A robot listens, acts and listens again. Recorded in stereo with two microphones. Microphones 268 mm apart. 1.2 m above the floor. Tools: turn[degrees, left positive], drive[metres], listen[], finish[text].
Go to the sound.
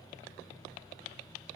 Action: listen[]
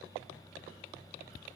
Action: listen[]
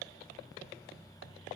Action: finish[I can't make out anything.]